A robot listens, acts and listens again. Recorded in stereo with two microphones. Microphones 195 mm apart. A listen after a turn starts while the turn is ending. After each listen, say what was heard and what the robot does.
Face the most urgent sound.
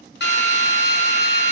Keep listening.
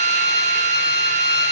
Keep listening.
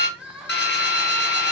Turn 30° right.
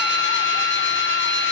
Keep listening.
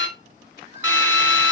So it is at 145° right. Turn 145° right.
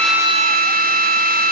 Keep listening.
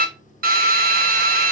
Keep listening.
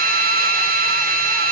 I heard crying from this way, but can't make it out now.